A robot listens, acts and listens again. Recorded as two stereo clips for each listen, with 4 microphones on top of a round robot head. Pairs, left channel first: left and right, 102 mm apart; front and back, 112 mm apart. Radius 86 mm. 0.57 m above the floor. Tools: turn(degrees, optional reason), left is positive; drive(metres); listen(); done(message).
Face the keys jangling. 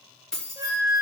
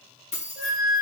turn(degrees=10, reason="The keys jangling: 10° left.")
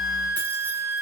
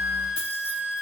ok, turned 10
listen()
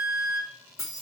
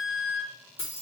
turn(degrees=30, reason="The keys jangling is now 30° left.")
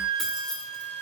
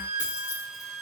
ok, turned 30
listen()
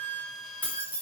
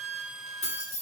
turn(degrees=20, reason="The keys jangling is now 20° left.")
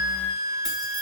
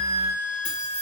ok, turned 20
listen()
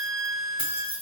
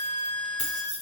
turn(degrees=15, reason="The keys jangling is now 15° left.")
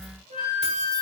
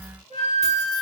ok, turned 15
listen()
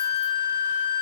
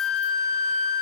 listen()
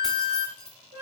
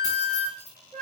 done("I heard keys jangling from this way, but can't make it out now.")